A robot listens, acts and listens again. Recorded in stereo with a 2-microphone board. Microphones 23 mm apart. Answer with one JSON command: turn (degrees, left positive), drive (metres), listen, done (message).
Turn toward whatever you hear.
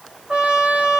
{"turn": -55}
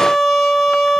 {"done": "Found it: a trumpet, straight ahead."}